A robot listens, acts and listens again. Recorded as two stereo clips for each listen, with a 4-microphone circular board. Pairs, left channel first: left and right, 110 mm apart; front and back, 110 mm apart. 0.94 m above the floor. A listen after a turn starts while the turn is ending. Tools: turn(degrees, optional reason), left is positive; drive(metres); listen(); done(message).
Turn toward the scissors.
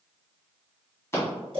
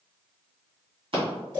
turn(degrees=155, reason="The scissors: 155° left.")
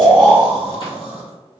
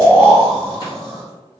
listen()
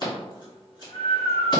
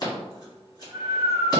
turn(degrees=45, reason="The scissors is now 45° left.")
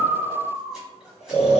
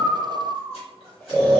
listen()
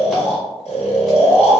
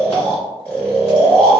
listen()
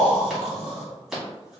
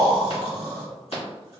done("Found it: scissors, straight ahead, 1 to 2 m away.")